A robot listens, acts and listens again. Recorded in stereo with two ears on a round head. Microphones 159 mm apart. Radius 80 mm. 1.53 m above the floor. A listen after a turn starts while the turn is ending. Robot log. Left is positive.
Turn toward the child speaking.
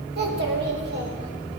note: The child speaking: about 65° right or 115° right.
cmd yaw -65
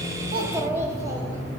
note: So it is at 15° right.
cmd yaw -15
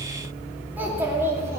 note: The child speaking is now 15° right.
cmd yaw -15
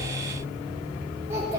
cmd idle
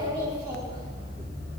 note: The child speaking is now 20° right.
cmd yaw -20
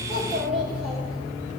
end: Facing the child speaking, 2 to 4 m away.